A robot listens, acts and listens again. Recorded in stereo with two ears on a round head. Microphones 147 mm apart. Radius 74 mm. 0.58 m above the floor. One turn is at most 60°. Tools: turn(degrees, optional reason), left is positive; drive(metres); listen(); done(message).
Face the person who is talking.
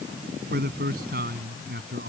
turn(degrees=-60, reason="The man speaking: about 60° right or 120° right.")
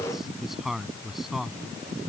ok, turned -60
done("Found it: a man speaking, straight ahead.")